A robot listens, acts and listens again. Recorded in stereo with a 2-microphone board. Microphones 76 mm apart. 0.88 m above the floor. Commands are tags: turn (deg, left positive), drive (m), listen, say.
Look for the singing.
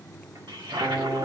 <turn deg="-60"/>
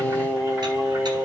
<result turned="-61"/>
<turn deg="-20"/>
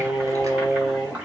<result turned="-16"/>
<turn deg="-15"/>
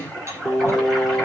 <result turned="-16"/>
<say>Facing the singing, 2 to 4 m away.</say>